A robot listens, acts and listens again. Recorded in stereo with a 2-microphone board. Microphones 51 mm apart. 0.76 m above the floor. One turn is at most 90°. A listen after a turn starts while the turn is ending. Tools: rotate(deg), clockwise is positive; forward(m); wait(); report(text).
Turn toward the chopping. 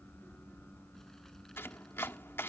rotate(-55)
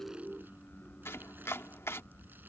rotate(-70)
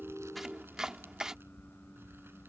rotate(15)
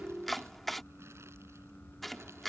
report("Facing the chopping.")